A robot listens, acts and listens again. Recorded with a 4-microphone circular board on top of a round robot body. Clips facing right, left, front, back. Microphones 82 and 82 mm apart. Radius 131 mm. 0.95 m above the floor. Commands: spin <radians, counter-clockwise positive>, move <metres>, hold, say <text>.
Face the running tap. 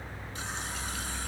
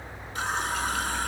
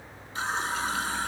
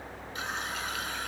spin 0.96
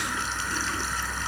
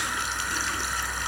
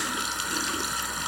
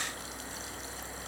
say Found it: a running tap, straight ahead.